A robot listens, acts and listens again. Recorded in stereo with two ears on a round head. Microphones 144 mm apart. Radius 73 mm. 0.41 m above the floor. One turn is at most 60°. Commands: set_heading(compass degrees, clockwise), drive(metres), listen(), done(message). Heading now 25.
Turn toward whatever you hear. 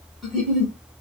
set_heading(355)
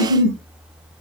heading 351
set_heading(26)
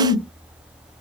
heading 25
done("Facing the giggle, 1 to 2 m away.")